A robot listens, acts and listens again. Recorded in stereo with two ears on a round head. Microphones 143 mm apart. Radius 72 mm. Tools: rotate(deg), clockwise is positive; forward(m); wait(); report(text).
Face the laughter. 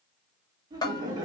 rotate(25)
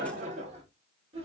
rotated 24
rotate(35)
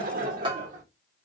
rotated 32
rotate(125)
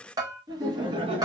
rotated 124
rotate(30)
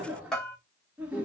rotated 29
rotate(10)
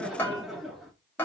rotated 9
report("Facing the laughter, 1 to 2 m away.")